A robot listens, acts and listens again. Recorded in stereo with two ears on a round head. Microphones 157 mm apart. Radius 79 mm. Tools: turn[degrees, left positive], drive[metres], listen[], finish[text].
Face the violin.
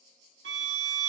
Thought: The violin: about 65° right or 115° right.
Action: turn[-65]
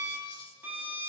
Thought: So it is at 10° right.
Action: turn[-10]
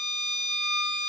Action: finish[Facing the violin.]